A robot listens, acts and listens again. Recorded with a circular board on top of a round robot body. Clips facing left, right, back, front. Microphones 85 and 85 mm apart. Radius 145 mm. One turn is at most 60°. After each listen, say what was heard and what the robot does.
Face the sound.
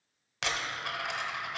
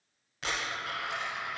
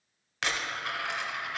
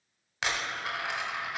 The dropped coin: 75° left. Turn 60° left.
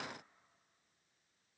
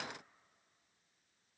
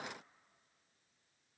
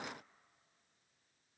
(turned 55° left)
Nothing new. It was at 20° left. Turn 20° left.
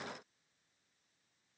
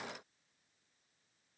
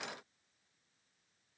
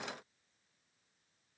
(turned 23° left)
Facing where the dropped coin came from. I can't hear it now.